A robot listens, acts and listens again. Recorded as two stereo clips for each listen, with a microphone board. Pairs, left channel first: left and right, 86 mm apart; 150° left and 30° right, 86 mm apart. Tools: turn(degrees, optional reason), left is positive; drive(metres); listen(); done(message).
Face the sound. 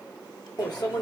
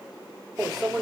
turn(degrees=60, reason="The microwave: 60° left.")
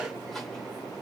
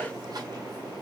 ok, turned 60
listen()
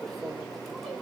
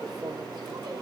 done("Facing the microwave, 1 to 2 m away.")